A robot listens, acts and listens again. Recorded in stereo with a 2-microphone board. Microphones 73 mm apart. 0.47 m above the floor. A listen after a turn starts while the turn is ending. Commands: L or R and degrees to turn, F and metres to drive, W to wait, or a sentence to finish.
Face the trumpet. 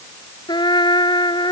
L90
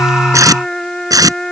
Found it: a trumpet, straight ahead.